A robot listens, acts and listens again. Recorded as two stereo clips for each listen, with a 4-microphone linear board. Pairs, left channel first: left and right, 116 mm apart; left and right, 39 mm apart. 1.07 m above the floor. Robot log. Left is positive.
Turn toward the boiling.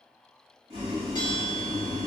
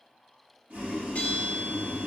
note: The boiling: about 45° right or 135° right.
cmd yaw -45
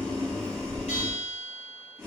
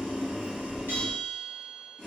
end: Found it: boiling, straight ahead.